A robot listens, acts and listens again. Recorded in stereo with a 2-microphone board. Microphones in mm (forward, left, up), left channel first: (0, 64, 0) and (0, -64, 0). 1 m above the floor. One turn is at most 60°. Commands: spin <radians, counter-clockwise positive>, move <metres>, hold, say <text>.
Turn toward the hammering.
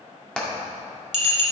spin 0.52
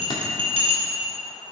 hold
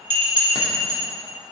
hold
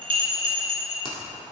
say I heard hammering, but can't make it out now. It was about 25° right or 145° left.